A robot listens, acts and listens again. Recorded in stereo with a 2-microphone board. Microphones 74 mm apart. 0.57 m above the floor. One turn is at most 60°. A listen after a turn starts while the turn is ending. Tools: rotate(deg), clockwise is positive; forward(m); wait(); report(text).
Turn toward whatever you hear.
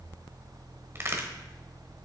rotate(35)
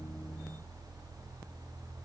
wait()
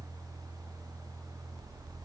report("I heard a crack, but can't make it out now. It was about straight ahead or 110° right.")